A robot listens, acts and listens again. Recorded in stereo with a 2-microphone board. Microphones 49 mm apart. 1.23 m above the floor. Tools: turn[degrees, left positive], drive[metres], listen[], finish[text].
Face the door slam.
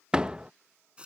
Thought: The door slam: about 20° right or 160° right.
Action: turn[-20]
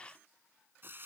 Action: listen[]
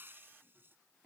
Action: finish[I heard a door slam, but can't make it out now. It was about straight ahead or 140° right.]